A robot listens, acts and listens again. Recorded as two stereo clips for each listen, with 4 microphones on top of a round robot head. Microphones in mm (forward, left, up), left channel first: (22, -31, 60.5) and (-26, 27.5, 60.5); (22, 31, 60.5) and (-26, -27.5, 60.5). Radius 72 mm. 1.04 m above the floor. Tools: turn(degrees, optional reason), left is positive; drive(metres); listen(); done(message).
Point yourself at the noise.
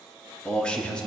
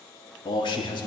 turn(degrees=30, reason="The man speaking: 30° left.")
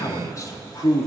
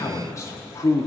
done("Found it: a man speaking, straight ahead.")